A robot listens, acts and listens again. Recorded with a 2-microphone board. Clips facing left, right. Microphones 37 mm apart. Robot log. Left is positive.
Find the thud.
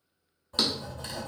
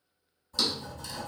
note: The thud: about 40° left or 140° left.
cmd yaw +40
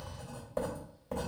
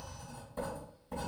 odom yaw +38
cmd idle
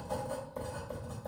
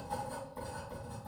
end: I heard a thud, but can't make it out now. It was about 5° left or 100° left.